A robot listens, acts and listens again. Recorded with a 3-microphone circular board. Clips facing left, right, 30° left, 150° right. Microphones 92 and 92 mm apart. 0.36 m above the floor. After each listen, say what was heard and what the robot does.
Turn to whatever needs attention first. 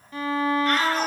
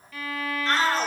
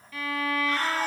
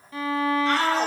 The shout: 150° right. Turn 150° right.
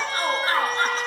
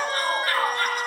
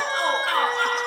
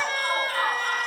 The shout is now 25° left. Turn 25° left.
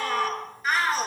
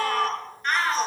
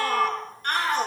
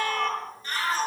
Facing the shout, over 4 m away.